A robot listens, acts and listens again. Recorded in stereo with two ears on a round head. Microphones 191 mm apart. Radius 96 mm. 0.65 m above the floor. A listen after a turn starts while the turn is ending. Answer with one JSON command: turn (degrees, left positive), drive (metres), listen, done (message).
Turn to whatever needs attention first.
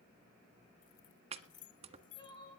{"turn": 25}
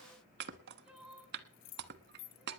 {"done": "Found it: crying, straight ahead, over 4 m away."}